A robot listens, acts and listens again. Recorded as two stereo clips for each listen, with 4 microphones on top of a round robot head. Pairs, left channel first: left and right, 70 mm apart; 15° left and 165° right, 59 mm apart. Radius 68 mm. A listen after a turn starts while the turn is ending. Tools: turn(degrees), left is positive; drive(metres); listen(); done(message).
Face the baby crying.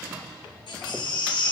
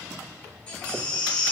turn(degrees=80)
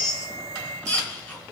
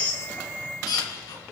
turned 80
turn(degrees=15)
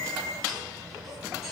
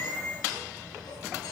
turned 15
listen()
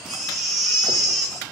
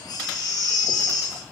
done("Facing the baby crying.")